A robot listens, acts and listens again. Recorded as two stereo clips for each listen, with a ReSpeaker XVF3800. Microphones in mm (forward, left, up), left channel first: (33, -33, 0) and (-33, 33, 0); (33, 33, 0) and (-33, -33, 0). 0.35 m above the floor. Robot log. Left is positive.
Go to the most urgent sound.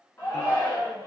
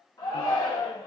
note: The shout: 15° left.
cmd yaw +15
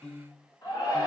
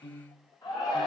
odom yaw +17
cmd fwd 1.0
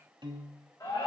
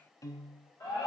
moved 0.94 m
cmd fwd 1.0
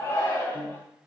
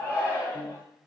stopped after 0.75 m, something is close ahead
end: Arrived at the shout, straight ahead.